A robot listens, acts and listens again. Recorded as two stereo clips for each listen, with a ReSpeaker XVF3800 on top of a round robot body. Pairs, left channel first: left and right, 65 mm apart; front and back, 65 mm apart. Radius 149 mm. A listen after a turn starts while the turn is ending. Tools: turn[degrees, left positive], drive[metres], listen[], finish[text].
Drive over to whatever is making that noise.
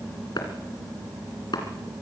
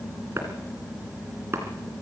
Thought: The chopping: 120° left.
Action: turn[120]
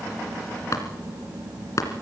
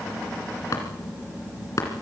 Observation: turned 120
Thought: The chopping is now 50° left.
Action: turn[50]
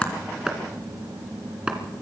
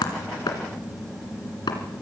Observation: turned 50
Thought: The chopping is now 15° right.
Action: turn[-15]
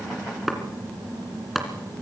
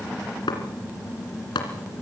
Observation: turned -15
Action: drive[1.0]
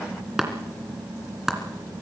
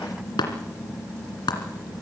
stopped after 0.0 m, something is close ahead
Action: finish[Blocked. The chopping is further on, straight ahead.]